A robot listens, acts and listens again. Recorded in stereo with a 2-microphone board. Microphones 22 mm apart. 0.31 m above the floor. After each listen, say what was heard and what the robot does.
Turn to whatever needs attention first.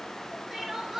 The crying: about 20° right or 160° right. Turn 20° right.
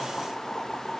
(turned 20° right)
Keep listening.
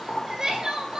So it is at 145° right. Turn 145° right.
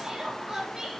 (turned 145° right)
The crying is now 25° right. Turn 25° right.
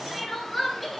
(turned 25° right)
The crying is now 10° left. Turn 10° left.
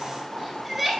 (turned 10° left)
Facing the crying.